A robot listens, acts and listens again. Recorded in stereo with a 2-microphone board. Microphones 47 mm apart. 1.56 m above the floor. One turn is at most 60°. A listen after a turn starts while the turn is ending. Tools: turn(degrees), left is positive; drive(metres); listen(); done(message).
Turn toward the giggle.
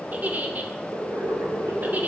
turn(degrees=-35)
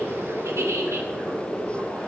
turn(degrees=-60)
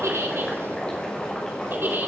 turn(degrees=-45)
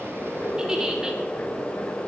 turn(degrees=-15)
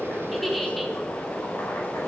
done("Facing the giggle, 2 to 4 m away.")